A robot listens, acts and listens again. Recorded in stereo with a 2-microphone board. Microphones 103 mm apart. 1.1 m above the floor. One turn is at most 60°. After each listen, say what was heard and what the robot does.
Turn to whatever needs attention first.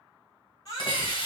The baby crying: about 40° left or 140° left. Turn 40° left.
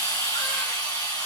Keep listening.
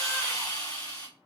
Keep listening.
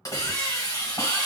I heard a baby crying, but can't make it out now. It was about straight ahead or 100° left.